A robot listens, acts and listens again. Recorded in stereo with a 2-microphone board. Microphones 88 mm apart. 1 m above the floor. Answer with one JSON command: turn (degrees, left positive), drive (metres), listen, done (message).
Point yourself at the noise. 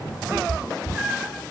{"turn": -30}
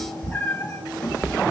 {"turn": 30}
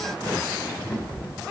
{"turn": 20}
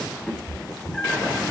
{"turn": 10}
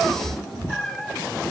{"done": "Facing the cat meowing."}